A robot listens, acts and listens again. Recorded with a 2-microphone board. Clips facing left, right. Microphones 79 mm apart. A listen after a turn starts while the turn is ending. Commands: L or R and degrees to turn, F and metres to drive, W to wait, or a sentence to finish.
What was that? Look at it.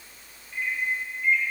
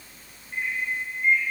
R45
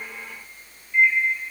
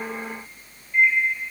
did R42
Facing the microwave, 2 to 4 m away.